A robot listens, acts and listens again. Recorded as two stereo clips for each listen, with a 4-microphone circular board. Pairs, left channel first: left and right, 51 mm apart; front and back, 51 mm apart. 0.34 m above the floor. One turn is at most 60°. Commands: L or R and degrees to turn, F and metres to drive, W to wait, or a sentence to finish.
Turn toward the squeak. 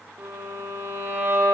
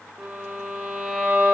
W
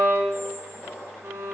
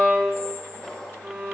L60
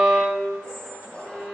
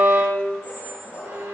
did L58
L20
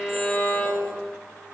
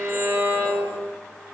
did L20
W
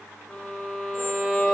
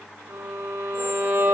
W
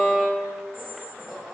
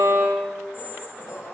Found it: a squeak, straight ahead, over 4 m away.